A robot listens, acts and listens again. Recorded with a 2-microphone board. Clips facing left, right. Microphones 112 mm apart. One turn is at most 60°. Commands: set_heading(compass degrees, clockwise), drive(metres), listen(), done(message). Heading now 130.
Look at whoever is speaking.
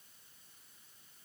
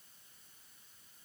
listen()
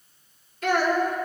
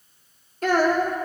set_heading(170)
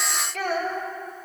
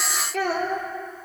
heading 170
set_heading(230)
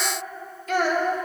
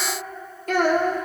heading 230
set_heading(285)
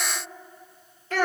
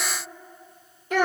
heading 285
set_heading(305)
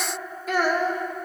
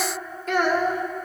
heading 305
done("Found it: a child speaking, straight ahead, 1 to 2 m away.")